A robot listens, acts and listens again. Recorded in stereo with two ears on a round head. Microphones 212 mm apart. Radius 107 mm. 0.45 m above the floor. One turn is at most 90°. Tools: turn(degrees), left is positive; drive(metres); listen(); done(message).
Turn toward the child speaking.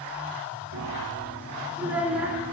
turn(degrees=-30)
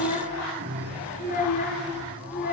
turn(degrees=40)
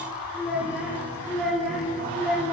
done("Found it: a child speaking, straight ahead.")